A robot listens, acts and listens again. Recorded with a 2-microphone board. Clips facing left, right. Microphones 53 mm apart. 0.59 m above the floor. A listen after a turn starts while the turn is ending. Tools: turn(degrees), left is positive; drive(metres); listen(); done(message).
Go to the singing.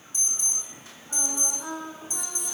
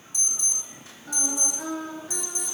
turn(degrees=-90)
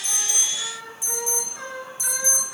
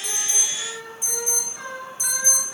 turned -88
drive(metres=1.0)
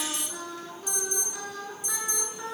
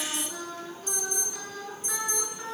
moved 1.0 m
turn(degrees=10)
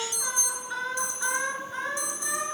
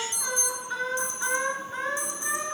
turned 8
drive(metres=1.0)
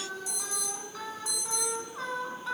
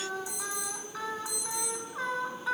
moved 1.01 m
drive(metres=1.0)
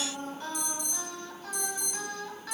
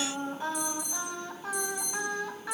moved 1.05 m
turn(degrees=-15)
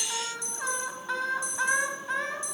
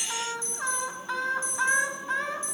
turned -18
drive(metres=1.0)
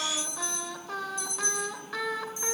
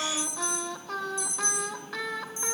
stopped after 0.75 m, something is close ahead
done("I am next to the singing.")